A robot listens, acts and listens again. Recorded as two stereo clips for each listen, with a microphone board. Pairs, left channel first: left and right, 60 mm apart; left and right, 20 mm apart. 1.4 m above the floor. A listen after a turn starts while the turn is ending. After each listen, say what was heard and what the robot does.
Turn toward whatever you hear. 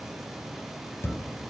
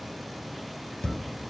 The thud: about 50° left or 130° left. Turn 50° left.
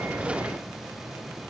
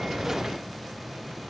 Keep listening.
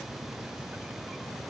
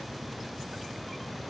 I heard a thud, but can't make it out now. It was about straight ahead or 80° left.